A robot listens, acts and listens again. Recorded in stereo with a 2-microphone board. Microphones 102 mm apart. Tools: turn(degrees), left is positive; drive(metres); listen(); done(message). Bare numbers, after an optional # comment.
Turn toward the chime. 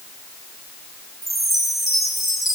turn(30)
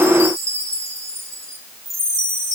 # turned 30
# So it is at 35° right.
turn(-35)
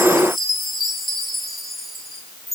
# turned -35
done("Found it: a chime, straight ahead, 2 to 4 m away.")